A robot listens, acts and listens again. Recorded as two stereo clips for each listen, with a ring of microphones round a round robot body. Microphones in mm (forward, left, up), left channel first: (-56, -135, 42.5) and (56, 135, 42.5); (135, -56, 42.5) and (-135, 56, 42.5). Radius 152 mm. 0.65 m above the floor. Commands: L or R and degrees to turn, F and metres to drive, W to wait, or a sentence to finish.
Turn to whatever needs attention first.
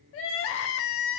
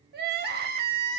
R150
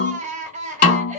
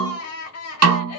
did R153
Found it: crying, straight ahead.